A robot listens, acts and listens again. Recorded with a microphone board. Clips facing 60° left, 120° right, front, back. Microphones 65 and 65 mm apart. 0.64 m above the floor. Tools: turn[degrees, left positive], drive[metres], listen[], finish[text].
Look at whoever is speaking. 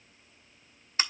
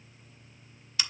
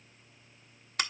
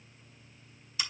Action: listen[]
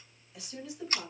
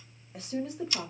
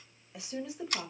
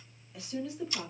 Thought: The woman speaking: 75° right.
Action: turn[-75]
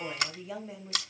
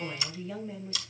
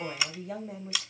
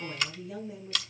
Thought: The woman speaking is now 20° right.
Action: turn[-20]
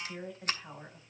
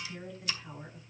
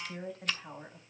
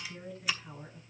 Action: finish[Facing the woman speaking.]